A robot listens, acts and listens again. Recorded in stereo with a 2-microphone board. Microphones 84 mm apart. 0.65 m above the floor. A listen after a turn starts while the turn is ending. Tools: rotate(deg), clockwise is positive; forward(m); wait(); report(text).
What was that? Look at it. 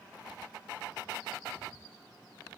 wait()
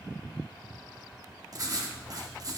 rotate(45)
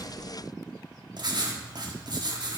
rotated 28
rotate(95)
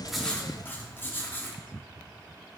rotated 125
rotate(-30)
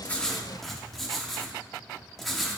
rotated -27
report("Found it: writing, straight ahead.")